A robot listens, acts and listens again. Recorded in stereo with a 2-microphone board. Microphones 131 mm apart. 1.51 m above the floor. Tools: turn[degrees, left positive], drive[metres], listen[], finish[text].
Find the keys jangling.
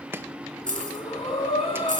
Action: turn[-90]
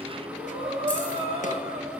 Action: listen[]
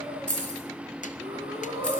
Action: finish[Found it: keys jangling, straight ahead.]